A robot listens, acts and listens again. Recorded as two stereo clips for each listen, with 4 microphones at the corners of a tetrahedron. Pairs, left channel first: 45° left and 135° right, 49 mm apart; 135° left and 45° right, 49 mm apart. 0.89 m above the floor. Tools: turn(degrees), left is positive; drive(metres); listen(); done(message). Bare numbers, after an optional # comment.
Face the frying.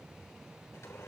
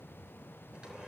listen()
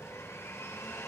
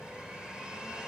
listen()
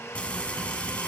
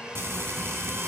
# The frying: 20° right.
turn(-20)
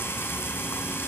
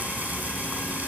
# The frying is now 10° left.
turn(10)
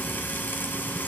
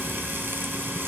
done("Facing the frying.")